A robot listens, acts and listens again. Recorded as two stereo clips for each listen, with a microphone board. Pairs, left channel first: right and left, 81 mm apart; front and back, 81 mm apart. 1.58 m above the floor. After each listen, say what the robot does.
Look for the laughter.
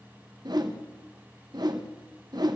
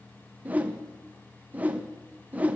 Keep listening.
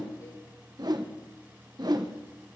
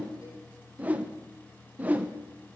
Keep listening.
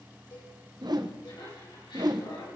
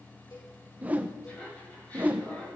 Turn 75° right.
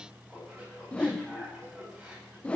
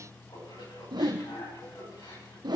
Turn 10° left.
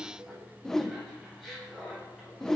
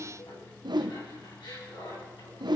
Found it: laughter, straight ahead.